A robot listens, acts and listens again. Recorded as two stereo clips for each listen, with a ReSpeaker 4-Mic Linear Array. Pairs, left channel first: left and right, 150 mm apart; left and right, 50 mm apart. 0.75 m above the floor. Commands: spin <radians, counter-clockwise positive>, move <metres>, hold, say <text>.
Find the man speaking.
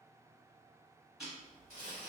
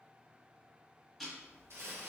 hold
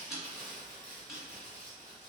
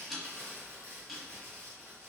hold
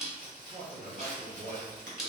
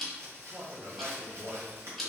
spin -1.13
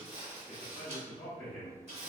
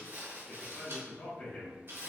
spin 0.17
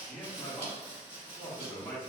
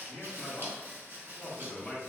say Found it: a man speaking, straight ahead.